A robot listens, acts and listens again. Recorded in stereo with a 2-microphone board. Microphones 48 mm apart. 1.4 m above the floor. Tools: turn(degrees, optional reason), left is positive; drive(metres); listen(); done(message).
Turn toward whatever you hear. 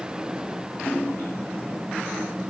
turn(degrees=45, reason="The splash: about 45° left or 135° left.")
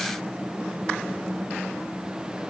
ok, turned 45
listen()
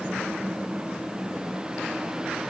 done("I heard a splash, but can't make it out now. It was about straight ahead or 90° left.")